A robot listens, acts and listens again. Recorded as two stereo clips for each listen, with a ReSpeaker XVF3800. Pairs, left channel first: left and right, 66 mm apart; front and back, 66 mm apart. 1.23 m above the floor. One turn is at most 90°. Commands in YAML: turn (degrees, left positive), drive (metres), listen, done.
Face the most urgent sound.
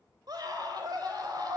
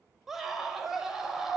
turn: -90
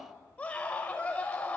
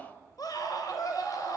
turn: 20
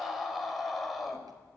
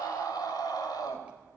done: "Found it: a scream, straight ahead."